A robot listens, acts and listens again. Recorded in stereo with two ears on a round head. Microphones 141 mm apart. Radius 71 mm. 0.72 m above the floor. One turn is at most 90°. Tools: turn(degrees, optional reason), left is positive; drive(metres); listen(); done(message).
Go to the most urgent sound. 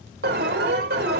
turn(degrees=-70, reason="The alarm: about 70° right or 110° right.")
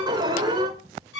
turn(degrees=-30, reason="So it is at 30° right.")
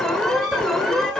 drive(metres=1.0)
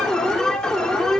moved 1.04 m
drive(metres=1.0)
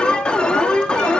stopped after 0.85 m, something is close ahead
turn(degrees=10, reason="The alarm is now 10° left.")
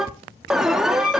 done("I am next to the alarm.")